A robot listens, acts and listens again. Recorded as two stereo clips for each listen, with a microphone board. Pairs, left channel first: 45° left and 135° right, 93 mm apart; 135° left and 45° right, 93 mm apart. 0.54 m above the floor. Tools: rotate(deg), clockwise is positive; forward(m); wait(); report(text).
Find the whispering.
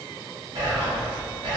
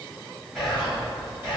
rotate(135)
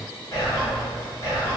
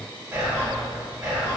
report("Found it: whispering, straight ahead, 1 to 2 m away.")